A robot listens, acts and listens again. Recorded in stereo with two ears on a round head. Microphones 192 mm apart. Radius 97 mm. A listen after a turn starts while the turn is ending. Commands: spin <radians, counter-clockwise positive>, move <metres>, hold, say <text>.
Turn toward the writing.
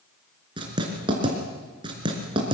spin -0.35
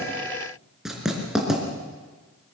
say Facing the writing.